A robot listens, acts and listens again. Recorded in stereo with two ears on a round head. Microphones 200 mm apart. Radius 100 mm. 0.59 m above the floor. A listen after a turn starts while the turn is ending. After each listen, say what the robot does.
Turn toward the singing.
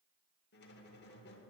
Keep listening.
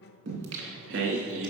Turn 60° right.
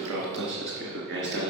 Turn 55° right.
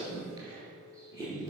Turn 15° right.
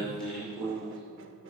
Found it: singing, straight ahead.